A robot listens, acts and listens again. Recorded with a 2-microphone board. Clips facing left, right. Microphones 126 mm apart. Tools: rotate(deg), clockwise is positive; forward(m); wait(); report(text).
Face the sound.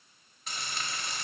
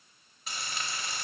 rotate(30)
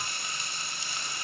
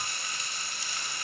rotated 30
rotate(-25)
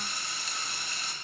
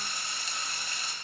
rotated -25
report("Found it: frying, straight ahead.")